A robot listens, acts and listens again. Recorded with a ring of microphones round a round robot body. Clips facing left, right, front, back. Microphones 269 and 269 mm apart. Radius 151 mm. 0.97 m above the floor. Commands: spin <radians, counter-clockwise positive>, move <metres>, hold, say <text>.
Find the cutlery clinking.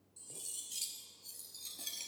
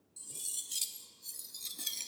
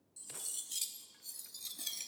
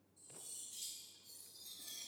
spin -0.52
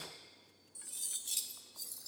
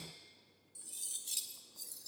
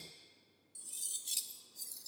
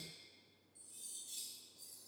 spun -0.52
say Facing the cutlery clinking.